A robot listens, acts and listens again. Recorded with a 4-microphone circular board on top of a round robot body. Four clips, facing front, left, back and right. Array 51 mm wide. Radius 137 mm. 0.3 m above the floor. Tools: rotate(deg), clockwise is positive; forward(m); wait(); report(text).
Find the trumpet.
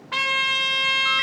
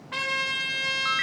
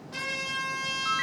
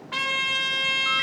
report("Found it: a trumpet, straight ahead.")